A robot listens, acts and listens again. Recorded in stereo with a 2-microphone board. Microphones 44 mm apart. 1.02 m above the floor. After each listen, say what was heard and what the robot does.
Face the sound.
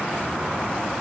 Keep listening.
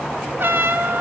The trumpet: about 65° right or 115° right. Turn 65° right.
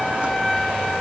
Facing the trumpet.